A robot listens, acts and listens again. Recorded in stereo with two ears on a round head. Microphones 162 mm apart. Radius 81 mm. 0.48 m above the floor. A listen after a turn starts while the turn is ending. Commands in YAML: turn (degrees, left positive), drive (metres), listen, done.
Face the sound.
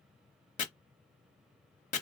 turn: 45
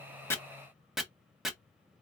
done: "Facing the chopping."